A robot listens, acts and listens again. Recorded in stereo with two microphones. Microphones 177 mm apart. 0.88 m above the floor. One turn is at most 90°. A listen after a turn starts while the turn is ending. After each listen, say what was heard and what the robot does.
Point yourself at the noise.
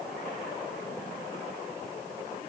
Keep listening.
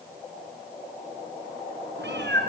Turn 90° right.
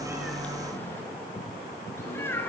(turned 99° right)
So it is at 15° left. Turn 15° left.
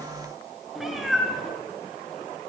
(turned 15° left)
Found it: a cat meowing, straight ahead.